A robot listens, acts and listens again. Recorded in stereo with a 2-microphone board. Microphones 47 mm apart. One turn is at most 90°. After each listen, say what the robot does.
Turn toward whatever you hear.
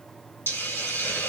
Turn 50° left.
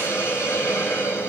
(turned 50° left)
Turn 75° left.
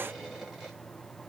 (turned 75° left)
Keep listening.
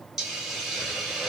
Turn 10° right.
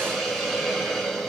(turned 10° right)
Found it: a hiss, straight ahead.